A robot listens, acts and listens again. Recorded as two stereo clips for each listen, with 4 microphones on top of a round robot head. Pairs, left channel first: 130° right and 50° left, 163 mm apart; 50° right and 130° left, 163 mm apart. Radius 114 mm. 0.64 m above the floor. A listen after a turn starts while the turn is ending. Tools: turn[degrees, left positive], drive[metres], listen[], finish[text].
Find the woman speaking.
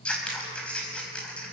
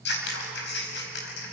Action: listen[]
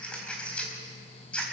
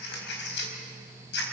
Action: listen[]
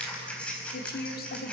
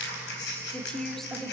Thought: The woman speaking: 140° right.
Action: turn[-140]
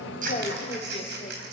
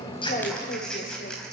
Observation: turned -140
Thought: The woman speaking is now 75° right.
Action: turn[-75]
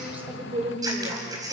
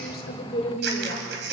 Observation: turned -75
Action: finish[Found it: a woman speaking, straight ahead.]